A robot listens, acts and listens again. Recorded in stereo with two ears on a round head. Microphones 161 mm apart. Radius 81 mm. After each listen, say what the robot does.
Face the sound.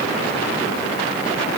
Keep listening.
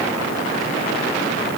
Keep listening.
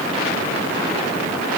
I can't make out anything to turn to.